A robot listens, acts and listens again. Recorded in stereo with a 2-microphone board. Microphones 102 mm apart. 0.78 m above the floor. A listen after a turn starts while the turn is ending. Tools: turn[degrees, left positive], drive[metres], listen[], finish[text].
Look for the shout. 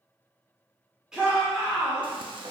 Action: turn[-30]
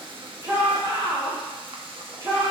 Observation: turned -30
Thought: So it is at 145° right.
Action: turn[-145]
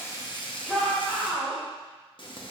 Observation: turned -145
Action: finish[Facing the shout.]